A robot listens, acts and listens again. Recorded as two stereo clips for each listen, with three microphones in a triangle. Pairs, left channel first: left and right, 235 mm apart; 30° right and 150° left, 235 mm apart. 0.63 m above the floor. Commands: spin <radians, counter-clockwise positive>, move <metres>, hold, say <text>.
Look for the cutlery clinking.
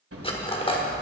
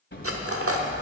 spin 2.71
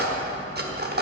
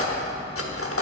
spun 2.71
spin -0.79
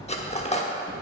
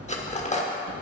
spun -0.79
spin 0.44
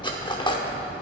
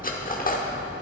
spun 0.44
hold
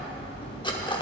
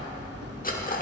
spin 0.35
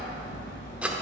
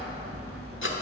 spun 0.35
hold
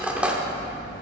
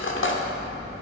say Facing the cutlery clinking.